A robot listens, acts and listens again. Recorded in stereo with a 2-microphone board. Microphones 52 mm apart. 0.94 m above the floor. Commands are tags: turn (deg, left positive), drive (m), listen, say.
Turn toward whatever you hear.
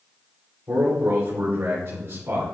<turn deg="-60"/>
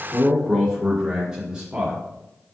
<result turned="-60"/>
<turn deg="-25"/>
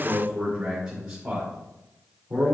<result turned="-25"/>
<turn deg="-30"/>
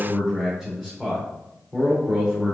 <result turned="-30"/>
<say>Found it: a man speaking, straight ahead.</say>